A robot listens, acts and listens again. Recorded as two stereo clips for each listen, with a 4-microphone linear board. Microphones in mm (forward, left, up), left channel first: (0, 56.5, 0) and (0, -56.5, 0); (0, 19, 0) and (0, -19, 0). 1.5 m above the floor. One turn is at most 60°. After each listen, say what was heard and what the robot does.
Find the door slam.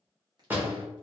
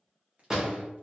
The door slam: about 15° right or 165° right. Turn 15° right.
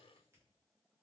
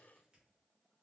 Keep listening.
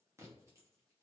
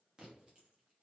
I heard a door slam, but can't make it out now. It was about straight ahead or 150° right.